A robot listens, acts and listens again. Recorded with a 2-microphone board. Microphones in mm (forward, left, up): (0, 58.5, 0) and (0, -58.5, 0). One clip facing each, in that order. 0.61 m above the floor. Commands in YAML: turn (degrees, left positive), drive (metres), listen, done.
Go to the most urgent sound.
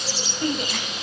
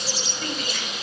turn: 25
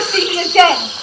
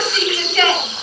turn: 130
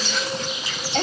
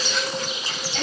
turn: 50
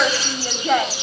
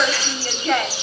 turn: 10
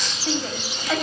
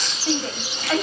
drive: 1.0
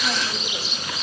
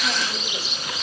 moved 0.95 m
listen: true
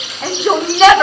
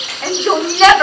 drive: 1.0
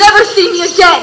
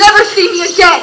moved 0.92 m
drive: 1.0
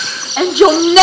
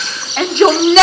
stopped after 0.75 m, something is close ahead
turn: 10
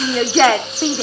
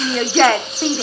done: "I am next to the shout."